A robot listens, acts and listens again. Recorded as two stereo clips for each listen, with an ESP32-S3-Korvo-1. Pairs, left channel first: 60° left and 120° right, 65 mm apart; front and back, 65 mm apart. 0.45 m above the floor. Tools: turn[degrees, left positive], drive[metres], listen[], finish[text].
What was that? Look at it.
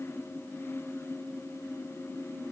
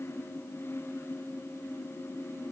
Action: listen[]
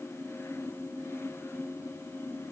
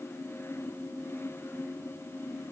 Action: listen[]
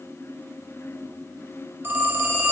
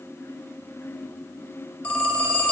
Thought: The phone ringing: 65° right.
Action: turn[-65]
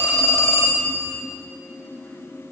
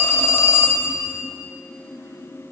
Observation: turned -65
Thought: The phone ringing is now 15° left.
Action: turn[15]
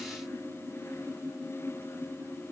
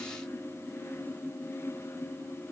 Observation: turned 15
Action: listen[]
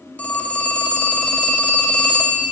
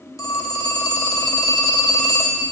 Action: finish[Facing the phone ringing.]